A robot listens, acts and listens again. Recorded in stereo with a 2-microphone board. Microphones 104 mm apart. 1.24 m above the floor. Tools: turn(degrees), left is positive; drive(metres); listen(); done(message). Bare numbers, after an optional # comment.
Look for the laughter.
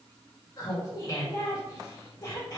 # The laughter: about 40° left or 140° left.
turn(40)
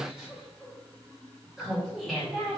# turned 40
done("Facing the laughter.")